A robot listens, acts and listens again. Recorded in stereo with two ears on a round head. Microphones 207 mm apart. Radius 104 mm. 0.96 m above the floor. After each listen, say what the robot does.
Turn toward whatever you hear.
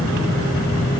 Keep listening.
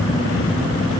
Keep listening.
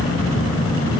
I can't make out anything to turn to.